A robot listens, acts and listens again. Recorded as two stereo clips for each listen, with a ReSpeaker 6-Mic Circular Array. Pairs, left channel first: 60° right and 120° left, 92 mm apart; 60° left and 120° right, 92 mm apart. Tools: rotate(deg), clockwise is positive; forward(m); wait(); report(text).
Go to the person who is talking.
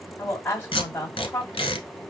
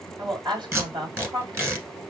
rotate(125)
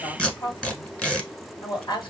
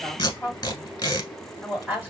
rotate(50)
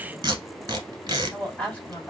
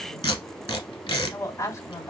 rotate(-15)
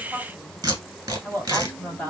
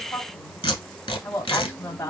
forward(1.0)
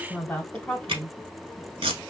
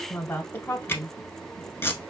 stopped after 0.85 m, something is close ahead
report("I am next to the woman speaking.")